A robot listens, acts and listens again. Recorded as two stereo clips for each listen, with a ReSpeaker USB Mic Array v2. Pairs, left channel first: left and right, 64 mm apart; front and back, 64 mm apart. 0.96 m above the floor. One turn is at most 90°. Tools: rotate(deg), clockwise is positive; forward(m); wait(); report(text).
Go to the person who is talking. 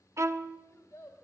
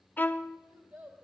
rotate(-90)
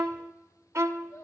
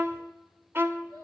rotate(-75)
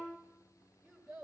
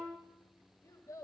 forward(1.0)
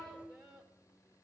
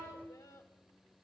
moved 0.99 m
forward(1.0)
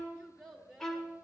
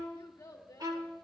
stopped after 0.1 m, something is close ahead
report("Arrived at the child speaking, straight ahead.")